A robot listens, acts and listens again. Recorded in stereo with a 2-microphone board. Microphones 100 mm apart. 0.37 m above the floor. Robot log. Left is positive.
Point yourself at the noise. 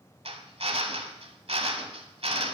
note: The drill: about 70° right or 110° right.
cmd yaw -70
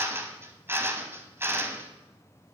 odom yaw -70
note: So it is at 25° right.
cmd yaw -25
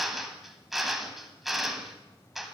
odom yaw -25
end: Found it: a drill, straight ahead.